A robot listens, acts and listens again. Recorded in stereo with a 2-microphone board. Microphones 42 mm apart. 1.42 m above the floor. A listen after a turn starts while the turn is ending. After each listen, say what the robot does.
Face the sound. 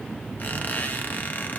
Turn 45° left.
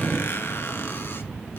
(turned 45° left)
Turn 85° left.
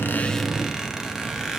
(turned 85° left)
Turn 15° right.
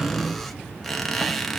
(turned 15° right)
Found it: a squeak, straight ahead, 1 to 2 m away.